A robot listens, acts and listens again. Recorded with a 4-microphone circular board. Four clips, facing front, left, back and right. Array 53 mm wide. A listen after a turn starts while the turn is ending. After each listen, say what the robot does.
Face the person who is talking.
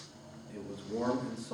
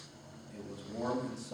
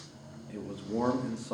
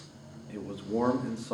Turn 120° right.
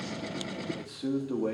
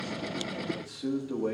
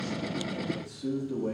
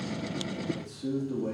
Turn 20° left.
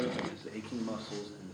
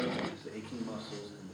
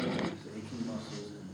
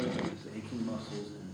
Found it: a man speaking, straight ahead, 1 to 2 m away.